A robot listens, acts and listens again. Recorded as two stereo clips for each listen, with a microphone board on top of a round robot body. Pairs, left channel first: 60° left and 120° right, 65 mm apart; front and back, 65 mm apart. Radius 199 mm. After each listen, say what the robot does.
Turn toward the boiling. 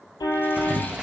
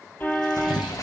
Turn 40° right.
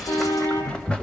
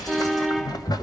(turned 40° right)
Turn 15° right.
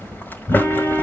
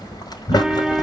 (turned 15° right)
Facing the boiling, 1 to 2 m away.